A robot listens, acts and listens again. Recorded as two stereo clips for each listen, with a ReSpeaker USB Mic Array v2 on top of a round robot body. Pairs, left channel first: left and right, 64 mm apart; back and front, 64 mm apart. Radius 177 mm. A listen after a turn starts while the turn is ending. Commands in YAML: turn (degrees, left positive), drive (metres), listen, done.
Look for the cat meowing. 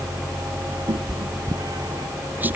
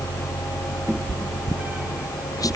turn: -65
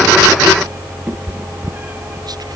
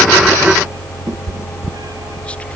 turn: -25
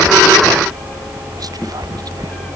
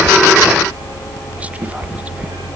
done: "Found it: a cat meowing, straight ahead."